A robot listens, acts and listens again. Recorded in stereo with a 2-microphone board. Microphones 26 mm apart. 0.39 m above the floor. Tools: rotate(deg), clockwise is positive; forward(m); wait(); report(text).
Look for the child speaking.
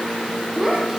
rotate(15)
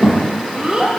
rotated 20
rotate(30)
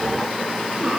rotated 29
wait()
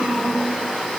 rotate(125)
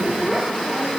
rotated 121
rotate(10)
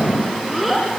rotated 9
report("Facing the child speaking, over 4 m away.")